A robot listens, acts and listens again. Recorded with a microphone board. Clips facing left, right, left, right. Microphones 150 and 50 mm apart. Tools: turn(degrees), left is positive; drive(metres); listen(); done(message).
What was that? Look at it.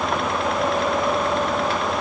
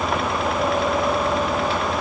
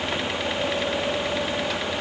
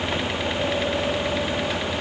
listen()
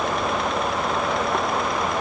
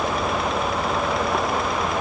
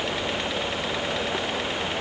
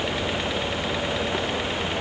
listen()
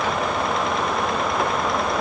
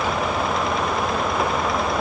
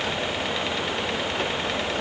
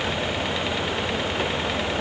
done("I can't make out anything.")